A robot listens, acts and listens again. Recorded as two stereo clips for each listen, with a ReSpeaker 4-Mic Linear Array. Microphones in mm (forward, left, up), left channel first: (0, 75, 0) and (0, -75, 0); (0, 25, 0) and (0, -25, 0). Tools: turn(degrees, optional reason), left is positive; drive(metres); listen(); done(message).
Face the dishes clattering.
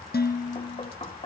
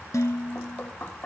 turn(degrees=90)
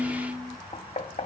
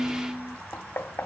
done("Facing the dishes clattering.")